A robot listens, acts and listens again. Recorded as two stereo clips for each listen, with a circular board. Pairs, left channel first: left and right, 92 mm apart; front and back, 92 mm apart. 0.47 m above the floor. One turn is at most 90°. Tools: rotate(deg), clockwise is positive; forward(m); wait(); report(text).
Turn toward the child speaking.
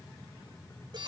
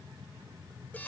wait()
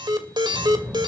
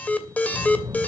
rotate(90)
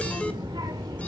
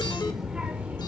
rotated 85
rotate(90)
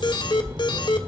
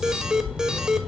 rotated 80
rotate(80)
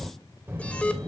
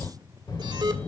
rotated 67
rotate(35)
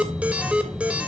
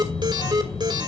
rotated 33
report("Facing the child speaking, 1 to 2 m away.")